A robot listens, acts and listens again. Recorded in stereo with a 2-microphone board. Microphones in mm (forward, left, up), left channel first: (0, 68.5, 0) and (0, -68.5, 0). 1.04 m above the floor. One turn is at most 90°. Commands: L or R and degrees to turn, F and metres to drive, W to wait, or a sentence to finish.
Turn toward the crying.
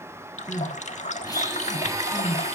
L25
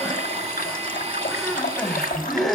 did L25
Facing the crying.